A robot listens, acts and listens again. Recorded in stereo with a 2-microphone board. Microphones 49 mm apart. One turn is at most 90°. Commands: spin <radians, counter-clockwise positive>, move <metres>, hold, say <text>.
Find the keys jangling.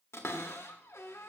hold
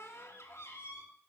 hold
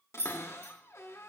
spin -1.22
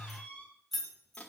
say Facing the keys jangling, 2 to 4 m away.